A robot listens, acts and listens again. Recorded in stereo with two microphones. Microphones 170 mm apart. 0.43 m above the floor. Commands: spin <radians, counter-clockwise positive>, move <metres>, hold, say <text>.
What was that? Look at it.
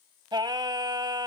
spin -0.44
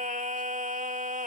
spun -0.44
spin -2.27
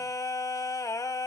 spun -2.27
spin 0.35
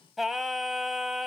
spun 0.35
say Facing the singing, under 1 m away.